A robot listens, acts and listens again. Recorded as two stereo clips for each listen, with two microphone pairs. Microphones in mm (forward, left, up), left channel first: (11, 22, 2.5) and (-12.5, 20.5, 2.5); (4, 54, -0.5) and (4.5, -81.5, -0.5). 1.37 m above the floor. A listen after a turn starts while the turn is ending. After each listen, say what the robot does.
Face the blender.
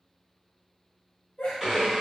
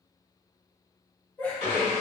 Turn 100° right.
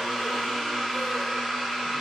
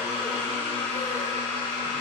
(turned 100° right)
Turn 15° left.
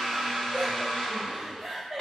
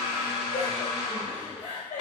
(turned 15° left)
Found it: a blender, straight ahead, 1 to 2 m away.